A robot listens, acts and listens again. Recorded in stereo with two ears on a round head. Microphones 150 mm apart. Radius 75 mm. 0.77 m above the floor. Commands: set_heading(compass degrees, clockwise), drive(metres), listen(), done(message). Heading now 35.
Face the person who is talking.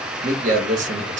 set_heading(85)
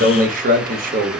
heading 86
set_heading(156)
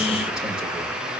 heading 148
listen()
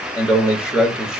done("Facing the man speaking.")